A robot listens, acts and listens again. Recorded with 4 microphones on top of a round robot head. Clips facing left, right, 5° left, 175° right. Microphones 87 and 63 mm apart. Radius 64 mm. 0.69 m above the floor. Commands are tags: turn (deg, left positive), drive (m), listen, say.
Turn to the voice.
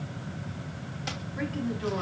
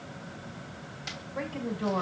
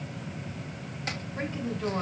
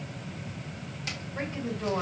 <turn deg="-105"/>
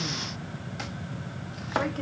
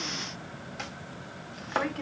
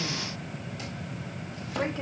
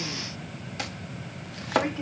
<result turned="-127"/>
<turn deg="25"/>
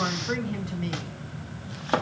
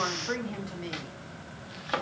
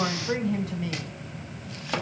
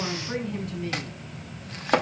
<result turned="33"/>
<say>Facing the woman speaking, 2 to 4 m away.</say>